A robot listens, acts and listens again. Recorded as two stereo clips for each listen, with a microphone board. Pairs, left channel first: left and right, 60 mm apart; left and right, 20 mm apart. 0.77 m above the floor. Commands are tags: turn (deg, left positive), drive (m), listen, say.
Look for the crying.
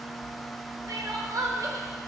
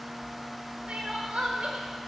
<turn deg="-90"/>
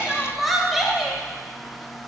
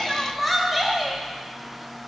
<say>Found it: crying, straight ahead.</say>